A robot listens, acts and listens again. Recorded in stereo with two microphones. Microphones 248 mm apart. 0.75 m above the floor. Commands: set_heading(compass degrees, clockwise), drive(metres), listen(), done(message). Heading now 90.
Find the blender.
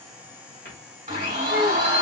set_heading(120)
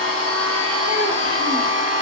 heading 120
set_heading(230)
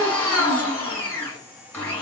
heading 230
set_heading(220)
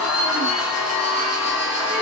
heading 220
done("Facing the blender.")